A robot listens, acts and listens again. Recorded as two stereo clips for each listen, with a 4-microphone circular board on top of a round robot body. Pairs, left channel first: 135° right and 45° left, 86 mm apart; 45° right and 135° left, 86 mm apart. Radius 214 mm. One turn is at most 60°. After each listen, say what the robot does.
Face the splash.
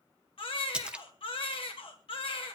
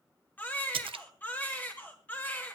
Turn 60° left.
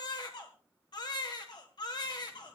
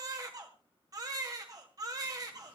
Turn 60° left.
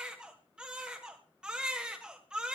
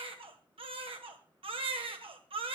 Facing where the splash came from. I can't hear it now.